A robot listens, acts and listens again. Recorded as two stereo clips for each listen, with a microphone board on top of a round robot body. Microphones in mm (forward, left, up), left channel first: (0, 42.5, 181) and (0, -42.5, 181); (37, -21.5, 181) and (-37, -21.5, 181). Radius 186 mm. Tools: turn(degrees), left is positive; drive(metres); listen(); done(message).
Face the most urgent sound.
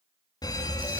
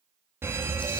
turn(degrees=125)
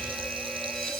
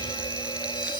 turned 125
done("Facing the fire alarm, 2 to 4 m away.")